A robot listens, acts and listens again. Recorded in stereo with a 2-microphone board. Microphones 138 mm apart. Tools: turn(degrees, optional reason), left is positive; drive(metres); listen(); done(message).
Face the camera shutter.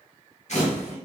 turn(degrees=55, reason="The camera shutter: about 55° left or 125° left.")
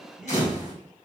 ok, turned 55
turn(degrees=65, reason="So it is at 65° left.")
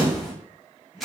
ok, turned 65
done("Facing the camera shutter.")